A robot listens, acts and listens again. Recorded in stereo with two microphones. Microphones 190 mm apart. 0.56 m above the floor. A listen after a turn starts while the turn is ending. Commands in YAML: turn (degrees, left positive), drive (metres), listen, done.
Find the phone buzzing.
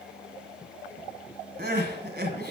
listen: true
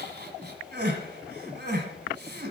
listen: true
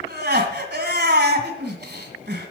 done: "I can't make out a phone buzzing to turn to."